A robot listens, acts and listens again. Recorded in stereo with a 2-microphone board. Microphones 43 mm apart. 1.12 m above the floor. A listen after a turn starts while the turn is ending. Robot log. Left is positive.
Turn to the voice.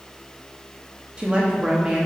note: The woman speaking: about 25° right or 155° right.
cmd yaw -25
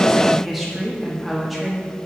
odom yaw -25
end: Facing the woman speaking.